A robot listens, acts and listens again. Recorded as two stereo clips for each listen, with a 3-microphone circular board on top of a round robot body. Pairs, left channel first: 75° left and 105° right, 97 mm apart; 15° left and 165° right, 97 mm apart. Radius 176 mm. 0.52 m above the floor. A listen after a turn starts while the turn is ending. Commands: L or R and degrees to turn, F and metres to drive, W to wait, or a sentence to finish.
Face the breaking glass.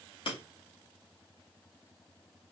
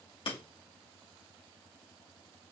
L45
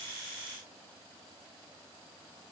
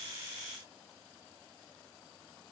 Facing where the breaking glass came from. I can't hear it now.